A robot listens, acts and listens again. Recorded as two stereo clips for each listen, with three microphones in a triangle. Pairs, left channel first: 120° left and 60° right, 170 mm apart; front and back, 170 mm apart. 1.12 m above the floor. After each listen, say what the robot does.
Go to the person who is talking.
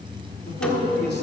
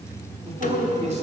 Turn 135° left.
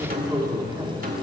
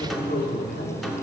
Turn 10° left.
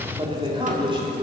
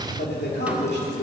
Drive 1.0 m forward.
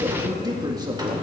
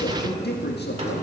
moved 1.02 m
Drive 1.0 m forward.
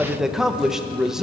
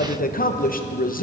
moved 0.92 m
Turn 25° left.
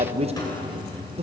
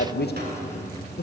Drive 1.0 m forward.
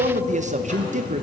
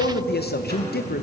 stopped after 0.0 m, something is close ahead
Turn 15° right.
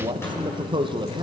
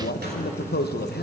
I am next to the man speaking.